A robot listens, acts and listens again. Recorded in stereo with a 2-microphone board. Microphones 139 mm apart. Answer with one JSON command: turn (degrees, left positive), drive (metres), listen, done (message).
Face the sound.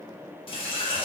{"turn": 35}
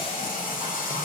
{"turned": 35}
{"turn": 105}
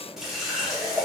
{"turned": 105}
{"done": "Found it: a running tap, straight ahead, under 1 m away."}